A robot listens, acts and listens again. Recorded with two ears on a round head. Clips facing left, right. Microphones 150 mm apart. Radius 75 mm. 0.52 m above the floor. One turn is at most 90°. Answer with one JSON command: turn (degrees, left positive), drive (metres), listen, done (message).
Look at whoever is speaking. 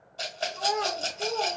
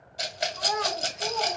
{"turn": 50}
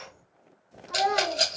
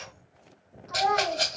{"turn": 70}
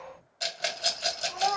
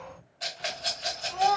{"turn": -10}
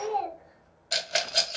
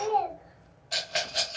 {"done": "Found it: a child speaking, straight ahead."}